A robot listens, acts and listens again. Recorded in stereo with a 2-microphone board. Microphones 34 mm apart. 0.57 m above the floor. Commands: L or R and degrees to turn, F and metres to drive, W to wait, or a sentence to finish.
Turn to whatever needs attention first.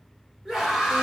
R30
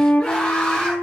L20
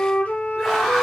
Found it: a scream, straight ahead.